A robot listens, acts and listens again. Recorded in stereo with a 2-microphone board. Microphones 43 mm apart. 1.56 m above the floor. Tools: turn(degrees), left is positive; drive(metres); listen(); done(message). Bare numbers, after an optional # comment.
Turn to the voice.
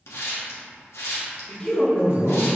# The man speaking: about 20° left or 160° left.
turn(20)
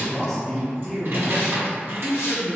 done("Found it: a man speaking, straight ahead.")